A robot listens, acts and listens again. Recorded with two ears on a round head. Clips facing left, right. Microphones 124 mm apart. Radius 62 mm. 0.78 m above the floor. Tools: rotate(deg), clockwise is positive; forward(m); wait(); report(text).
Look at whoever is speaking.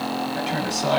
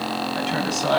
rotate(-30)
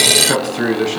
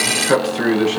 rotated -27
rotate(-140)
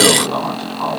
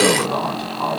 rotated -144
report("Found it: a man speaking, straight ahead, over 4 m away.")